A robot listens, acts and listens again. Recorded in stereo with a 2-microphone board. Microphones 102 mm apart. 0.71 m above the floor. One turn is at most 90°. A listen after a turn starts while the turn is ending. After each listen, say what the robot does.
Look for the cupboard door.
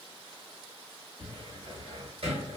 Turn 70° right.
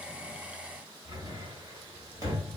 Turn 35° right.
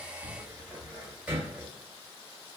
Turn 15° right.
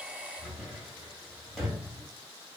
Found it: a cupboard door, straight ahead.